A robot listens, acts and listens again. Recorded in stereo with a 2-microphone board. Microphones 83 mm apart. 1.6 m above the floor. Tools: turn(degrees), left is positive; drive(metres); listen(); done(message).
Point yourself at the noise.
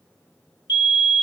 turn(degrees=60)
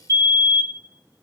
turn(degrees=40)
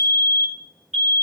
done("Facing the fire alarm, 1 to 2 m away.")